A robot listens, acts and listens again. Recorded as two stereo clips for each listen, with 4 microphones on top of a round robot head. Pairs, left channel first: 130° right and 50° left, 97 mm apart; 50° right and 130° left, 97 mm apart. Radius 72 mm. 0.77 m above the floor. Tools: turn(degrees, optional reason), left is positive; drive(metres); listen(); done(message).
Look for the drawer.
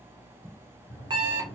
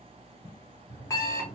turn(degrees=-70, reason="The drawer: 70° right.")
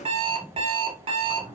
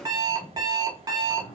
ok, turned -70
done("Facing the drawer.")